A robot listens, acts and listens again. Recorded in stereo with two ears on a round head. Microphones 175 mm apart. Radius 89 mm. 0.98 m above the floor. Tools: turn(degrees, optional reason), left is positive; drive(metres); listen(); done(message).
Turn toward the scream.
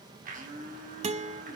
listen()
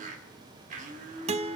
listen()
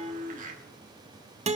done("I can't make out a scream, only a blender and a guitar.")